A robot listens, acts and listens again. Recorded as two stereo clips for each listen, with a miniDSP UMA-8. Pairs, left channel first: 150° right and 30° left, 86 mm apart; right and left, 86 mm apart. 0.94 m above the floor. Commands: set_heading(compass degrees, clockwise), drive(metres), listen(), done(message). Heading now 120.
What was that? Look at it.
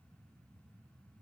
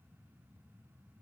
listen()
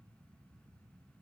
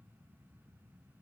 listen()
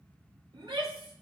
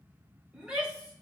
set_heading(105)
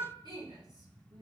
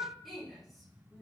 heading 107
done("Facing the shout, 2 to 4 m away.")